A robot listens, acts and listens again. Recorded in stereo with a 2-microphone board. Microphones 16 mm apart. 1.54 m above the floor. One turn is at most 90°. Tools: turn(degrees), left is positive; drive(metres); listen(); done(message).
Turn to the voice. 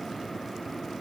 listen()
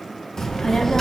turn(degrees=30)
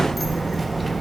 done("Found it: a child speaking, straight ahead, 1 to 2 m away.")